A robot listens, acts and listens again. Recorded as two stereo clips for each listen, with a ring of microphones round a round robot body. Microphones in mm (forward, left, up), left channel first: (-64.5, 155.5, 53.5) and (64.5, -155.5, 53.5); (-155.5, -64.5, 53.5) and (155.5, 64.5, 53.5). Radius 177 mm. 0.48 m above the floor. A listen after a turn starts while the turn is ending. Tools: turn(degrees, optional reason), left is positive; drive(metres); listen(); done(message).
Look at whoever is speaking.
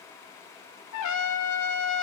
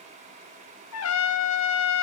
listen()
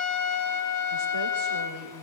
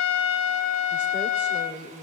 turn(degrees=-65, reason="The woman speaking: 65° right.")
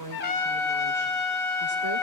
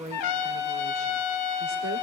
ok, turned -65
listen()
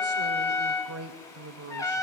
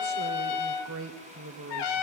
turn(degrees=-25, reason="The woman speaking is now 25° right.")
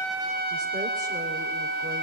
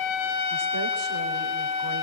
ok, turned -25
listen()
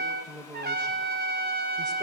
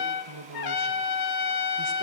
turn(degrees=10, reason="The woman speaking is now 10° left.")
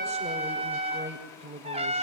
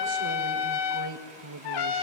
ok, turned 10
done("Facing the woman speaking, 2 to 4 m away.")